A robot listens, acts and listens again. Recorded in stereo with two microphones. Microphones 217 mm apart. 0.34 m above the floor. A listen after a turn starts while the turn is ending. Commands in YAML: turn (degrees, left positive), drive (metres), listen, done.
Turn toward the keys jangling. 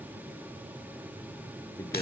listen: true
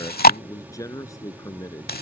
listen: true
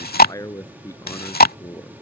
done: "I can't make out keys jangling, only chewing and a man speaking."